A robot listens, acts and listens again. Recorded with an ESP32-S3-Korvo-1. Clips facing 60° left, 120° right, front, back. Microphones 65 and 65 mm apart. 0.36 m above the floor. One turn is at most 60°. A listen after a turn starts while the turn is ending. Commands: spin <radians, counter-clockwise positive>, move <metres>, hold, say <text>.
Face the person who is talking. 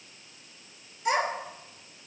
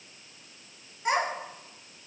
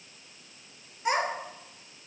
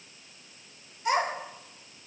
spin -1.05
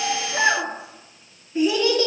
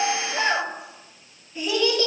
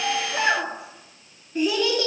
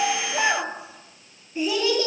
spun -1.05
spin -0.17
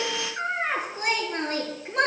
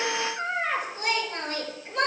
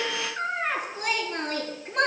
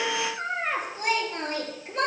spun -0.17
say Found it: a child speaking, straight ahead.